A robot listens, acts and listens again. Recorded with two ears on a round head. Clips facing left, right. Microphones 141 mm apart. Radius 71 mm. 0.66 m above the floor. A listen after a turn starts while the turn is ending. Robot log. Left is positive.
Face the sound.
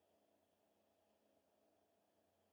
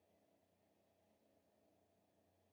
cmd idle
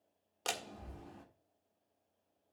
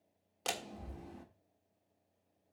cmd yaw +30
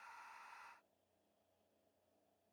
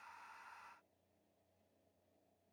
cmd idle
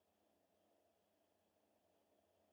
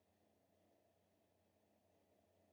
end: I heard a door slam, but can't make it out now. It was about 30° right or 150° left.